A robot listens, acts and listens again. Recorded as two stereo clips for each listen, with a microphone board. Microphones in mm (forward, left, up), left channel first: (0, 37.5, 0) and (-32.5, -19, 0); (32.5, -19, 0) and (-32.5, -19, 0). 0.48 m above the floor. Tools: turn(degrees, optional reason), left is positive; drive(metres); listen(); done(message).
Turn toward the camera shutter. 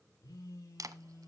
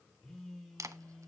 turn(degrees=-145, reason="The camera shutter: 145° right.")
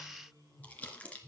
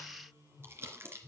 listen()
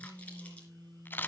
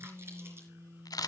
done("Found it: a camera shutter, straight ahead.")